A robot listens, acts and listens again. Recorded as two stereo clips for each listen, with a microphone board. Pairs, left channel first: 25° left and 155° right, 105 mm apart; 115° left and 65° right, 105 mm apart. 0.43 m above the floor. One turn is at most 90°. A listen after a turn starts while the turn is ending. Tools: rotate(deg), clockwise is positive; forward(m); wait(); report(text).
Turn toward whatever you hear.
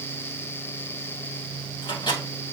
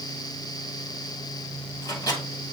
rotate(-65)
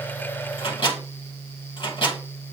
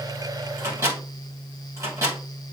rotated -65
rotate(10)
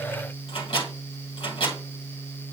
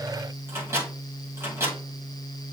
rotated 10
report("Facing the microwave.")